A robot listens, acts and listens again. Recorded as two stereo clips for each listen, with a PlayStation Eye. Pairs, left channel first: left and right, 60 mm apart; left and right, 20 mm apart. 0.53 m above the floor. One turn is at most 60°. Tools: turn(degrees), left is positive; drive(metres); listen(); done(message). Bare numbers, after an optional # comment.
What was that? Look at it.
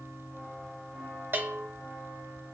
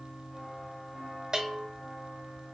# The bell: about 35° right or 145° right.
turn(-35)
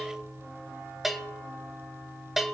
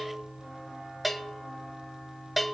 done("Found it: a bell, straight ahead, 1 to 2 m away.")